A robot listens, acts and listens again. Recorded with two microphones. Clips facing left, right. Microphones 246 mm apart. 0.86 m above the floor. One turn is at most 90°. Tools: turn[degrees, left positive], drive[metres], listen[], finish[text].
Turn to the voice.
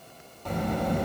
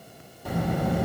Action: turn[-30]
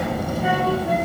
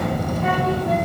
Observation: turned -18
Thought: So it is at 10° left.
Action: turn[10]
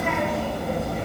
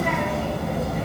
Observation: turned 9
Action: finish[Found it: a child speaking, straight ahead, under 1 m away.]